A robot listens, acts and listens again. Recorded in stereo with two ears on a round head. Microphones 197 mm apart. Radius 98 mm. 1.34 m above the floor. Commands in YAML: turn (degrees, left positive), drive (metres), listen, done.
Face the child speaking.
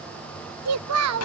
turn: -90
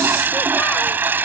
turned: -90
listen: true
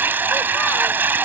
listen: true
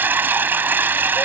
done: "I heard a child speaking from this way, but can't make it out now."